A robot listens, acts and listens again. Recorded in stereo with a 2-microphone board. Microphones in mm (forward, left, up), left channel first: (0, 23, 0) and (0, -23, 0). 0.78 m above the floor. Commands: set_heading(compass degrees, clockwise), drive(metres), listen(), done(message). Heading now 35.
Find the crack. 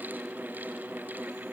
listen()
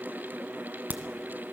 set_heading(80)
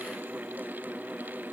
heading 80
listen()
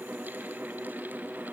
done("I heard a crack, but can't make it out now. It was about straight ahead or 90° right.")